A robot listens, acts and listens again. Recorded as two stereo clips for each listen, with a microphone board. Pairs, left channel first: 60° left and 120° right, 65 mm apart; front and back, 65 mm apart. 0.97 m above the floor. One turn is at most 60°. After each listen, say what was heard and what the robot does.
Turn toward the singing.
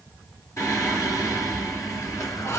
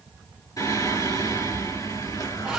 The singing: 20° left. Turn 20° left.
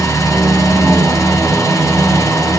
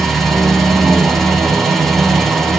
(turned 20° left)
Found it: singing, straight ahead, 2 to 4 m away.